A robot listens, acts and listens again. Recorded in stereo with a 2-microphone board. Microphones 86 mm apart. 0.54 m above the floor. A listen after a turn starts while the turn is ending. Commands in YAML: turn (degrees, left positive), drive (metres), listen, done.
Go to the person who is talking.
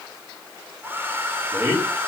turn: -25
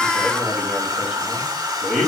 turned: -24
drive: 1.0
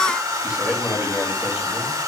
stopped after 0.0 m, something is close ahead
turn: -10
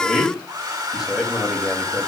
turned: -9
done: "Blocked. The man speaking is further on, straight ahead."